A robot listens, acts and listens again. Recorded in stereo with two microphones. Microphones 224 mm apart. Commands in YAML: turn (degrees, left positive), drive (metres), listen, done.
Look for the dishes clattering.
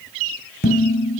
turn: 50
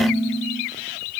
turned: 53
done: "Found it: dishes clattering, straight ahead, 2 to 4 m away."